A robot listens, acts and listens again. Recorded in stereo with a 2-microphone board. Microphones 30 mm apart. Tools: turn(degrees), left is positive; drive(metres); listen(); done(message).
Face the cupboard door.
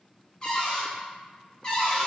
turn(degrees=30)
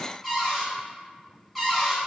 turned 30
done("Facing the cupboard door.")